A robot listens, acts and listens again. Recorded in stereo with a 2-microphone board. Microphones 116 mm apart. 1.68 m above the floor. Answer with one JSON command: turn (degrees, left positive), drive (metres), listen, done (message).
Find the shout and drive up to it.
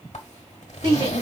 {"turn": -45}
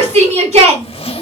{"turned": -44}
{"turn": -90}
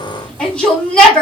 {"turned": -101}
{"turn": 10}
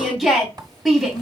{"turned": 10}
{"drive": 1.0}
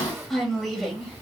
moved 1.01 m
{"drive": 1.0}
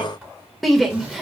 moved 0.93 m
{"drive": 1.0}
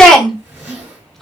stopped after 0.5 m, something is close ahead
{"done": "Arrived at the shout, straight ahead."}